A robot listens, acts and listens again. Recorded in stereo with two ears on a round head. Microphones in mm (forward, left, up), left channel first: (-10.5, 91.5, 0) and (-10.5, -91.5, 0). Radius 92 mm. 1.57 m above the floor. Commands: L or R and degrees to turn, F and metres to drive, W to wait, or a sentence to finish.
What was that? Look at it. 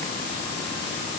W
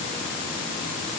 W
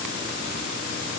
I can't make out anything.